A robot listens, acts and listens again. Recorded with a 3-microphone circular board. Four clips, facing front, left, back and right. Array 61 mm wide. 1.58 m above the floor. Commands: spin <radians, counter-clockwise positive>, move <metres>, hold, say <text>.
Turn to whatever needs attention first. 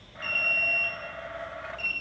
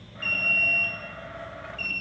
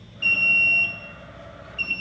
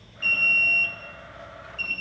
spin 2.97
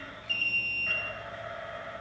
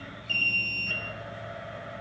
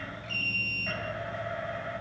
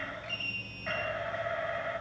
spin 0.79
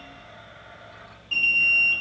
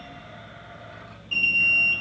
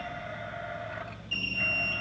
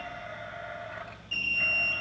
spin 0.17
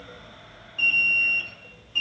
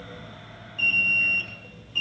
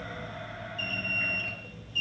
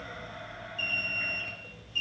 say Facing the alarm, 2 to 4 m away.